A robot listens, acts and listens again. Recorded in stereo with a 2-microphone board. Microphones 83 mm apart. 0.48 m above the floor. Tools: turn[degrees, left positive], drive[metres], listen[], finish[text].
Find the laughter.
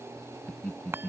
Action: turn[30]
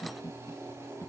Thought: So it is at 145° left.
Action: turn[145]
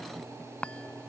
Action: listen[]
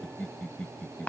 Thought: The laughter is now 15° left.
Action: turn[15]
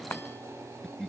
Action: finish[Facing the laughter.]